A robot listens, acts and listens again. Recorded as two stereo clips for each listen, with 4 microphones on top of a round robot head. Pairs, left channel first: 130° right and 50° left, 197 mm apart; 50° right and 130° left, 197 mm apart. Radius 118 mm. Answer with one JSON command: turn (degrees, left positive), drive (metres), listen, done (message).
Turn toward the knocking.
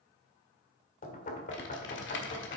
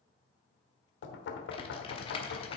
{"turn": -80}
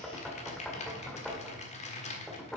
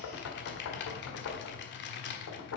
{"turn": -45}
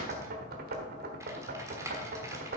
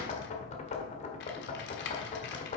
{"done": "Facing the knocking, 1 to 2 m away."}